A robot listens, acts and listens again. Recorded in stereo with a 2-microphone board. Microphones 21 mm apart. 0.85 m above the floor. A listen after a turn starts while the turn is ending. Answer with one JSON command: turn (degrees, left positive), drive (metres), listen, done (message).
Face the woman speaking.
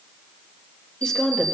{"turn": 35}
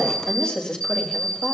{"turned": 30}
{"turn": 120}
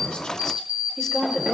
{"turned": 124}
{"done": "Found it: a woman speaking, straight ahead."}